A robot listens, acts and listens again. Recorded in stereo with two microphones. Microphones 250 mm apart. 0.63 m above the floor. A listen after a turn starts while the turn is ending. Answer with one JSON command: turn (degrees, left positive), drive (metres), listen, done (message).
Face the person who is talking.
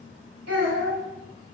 {"turn": -75}
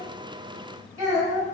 {"turn": -15}
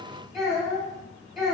{"done": "Facing the child speaking, 1 to 2 m away."}